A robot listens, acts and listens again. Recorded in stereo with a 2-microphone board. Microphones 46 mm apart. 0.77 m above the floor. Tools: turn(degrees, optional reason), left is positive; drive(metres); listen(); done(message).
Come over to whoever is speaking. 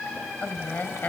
turn(degrees=45, reason="The woman speaking: about 45° left or 135° left.")
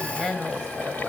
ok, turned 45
drive(metres=1.0)
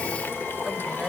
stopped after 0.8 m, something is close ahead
listen()
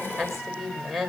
done("Blocked. The woman speaking is further on, straight ahead.")